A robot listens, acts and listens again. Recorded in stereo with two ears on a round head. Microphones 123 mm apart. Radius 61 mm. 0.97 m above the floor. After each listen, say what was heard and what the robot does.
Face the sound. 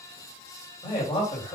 The man speaking: about 40° left or 140° left. Turn 40° left.
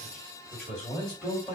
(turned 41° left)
So it is at 10° left. Turn 10° left.
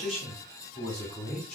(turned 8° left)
Facing the man speaking.